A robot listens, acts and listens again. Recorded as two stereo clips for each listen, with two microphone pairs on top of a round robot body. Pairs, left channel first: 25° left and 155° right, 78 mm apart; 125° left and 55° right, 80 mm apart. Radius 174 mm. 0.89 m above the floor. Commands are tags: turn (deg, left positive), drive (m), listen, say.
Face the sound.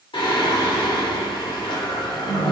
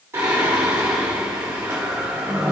<say>Found it: singing, straight ahead.</say>